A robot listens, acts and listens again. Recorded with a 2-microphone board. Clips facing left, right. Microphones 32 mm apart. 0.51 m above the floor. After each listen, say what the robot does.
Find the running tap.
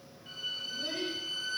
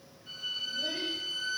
Keep listening.
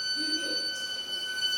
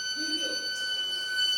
Keep listening.
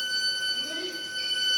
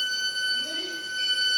I can't make out a running tap to turn to.